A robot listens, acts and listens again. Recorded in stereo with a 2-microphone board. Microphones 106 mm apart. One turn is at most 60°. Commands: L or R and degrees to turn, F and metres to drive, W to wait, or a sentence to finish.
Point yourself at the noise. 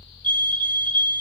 L15
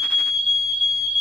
Found it: a fire alarm, straight ahead.